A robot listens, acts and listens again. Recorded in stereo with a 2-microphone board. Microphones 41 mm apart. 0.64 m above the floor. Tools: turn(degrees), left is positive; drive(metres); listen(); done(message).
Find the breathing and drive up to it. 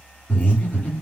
turn(degrees=40)
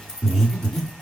drive(metres=1.0)
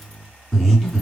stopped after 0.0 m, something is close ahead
done("Blocked. The breathing is further on, straight ahead.")